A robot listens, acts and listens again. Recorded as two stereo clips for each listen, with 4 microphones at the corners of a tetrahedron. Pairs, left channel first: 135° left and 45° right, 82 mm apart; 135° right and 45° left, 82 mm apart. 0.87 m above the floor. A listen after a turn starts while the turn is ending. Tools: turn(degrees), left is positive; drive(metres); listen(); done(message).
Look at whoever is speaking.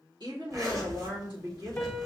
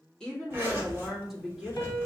turn(degrees=-40)
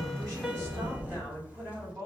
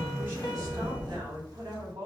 turn(degrees=15)
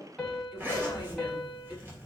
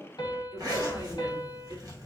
listen()
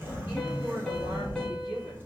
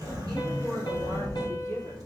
listen()
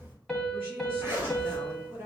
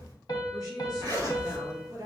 turn(degrees=10)
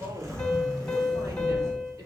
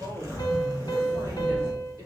listen()
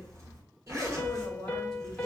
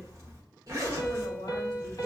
listen()
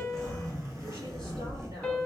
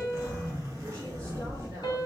done("I heard a woman speaking from this way, but can't make it out now.")